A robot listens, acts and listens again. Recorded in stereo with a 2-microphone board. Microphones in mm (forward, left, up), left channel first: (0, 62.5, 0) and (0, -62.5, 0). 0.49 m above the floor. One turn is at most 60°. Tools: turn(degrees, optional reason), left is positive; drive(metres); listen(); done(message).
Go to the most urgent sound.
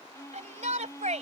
turn(degrees=-60, reason="The shout: about 70° right or 110° right.")
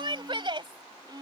turn(degrees=-45, reason="So it is at 45° right.")
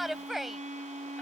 drive(metres=1.0)
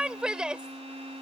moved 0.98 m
drive(metres=1.0)
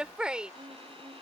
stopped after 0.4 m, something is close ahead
turn(degrees=-10, reason="The shout is now 10° right.")
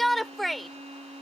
done("Arrived at the shout, straight ahead.")